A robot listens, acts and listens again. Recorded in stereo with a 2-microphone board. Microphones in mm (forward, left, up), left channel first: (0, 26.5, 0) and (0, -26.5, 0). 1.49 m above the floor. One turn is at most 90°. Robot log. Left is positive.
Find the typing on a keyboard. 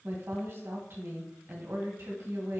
cmd idle
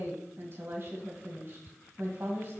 cmd idle
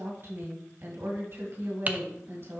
note: The typing on a keyboard: about 30° right or 150° right.
cmd yaw -30
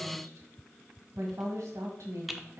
end: Facing the typing on a keyboard, under 1 m away.